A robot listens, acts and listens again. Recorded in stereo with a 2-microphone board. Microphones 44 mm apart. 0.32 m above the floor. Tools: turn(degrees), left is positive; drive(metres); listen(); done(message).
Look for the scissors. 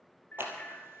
turn(degrees=-60)
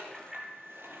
turn(degrees=-60)
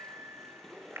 turn(degrees=10)
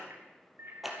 done("Found it: scissors, straight ahead, 2 to 4 m away.")